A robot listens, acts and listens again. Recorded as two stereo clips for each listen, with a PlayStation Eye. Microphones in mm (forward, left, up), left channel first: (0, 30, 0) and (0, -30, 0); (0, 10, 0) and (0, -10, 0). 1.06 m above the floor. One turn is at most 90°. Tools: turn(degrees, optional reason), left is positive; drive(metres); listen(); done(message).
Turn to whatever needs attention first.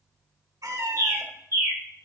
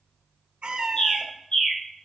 listen()
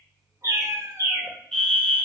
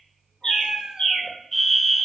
turn(degrees=30)
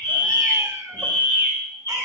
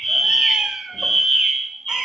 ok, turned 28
turn(degrees=90, reason="So it is at 135° left.")
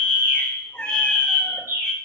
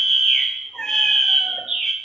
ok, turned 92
turn(degrees=45, reason="The fire alarm is now 45° left.")
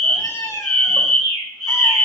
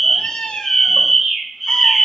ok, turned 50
done("Found it: a fire alarm, straight ahead, 1 to 2 m away.")